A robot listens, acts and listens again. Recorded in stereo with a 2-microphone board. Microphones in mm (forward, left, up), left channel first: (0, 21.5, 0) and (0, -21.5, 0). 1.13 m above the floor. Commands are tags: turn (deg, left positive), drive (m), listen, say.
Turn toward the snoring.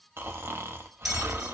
<turn deg="-70"/>
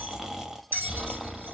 <turn deg="-15"/>
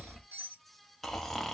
<say>Found it: snoring, straight ahead.</say>